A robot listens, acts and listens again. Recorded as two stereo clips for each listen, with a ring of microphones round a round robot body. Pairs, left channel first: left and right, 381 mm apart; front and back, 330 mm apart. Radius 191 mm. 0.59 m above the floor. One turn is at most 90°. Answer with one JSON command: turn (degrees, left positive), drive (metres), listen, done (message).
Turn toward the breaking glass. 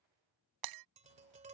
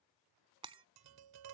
{"turn": -90}
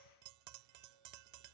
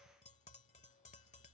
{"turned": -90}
{"turn": -15}
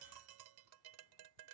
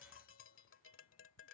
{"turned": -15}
{"done": "I heard breaking glass from this way, but can't make it out now."}